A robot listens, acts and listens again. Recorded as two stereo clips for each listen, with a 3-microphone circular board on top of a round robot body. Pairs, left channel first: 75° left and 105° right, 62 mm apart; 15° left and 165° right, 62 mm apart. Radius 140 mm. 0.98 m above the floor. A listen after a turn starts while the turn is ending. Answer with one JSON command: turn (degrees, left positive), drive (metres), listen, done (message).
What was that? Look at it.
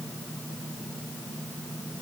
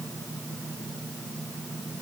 {"listen": true}
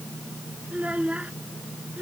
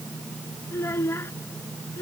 {"turn": -40}
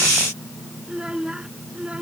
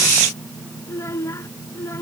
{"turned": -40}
{"turn": -30}
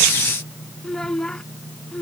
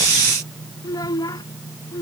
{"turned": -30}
{"done": "Found it: a child speaking, straight ahead."}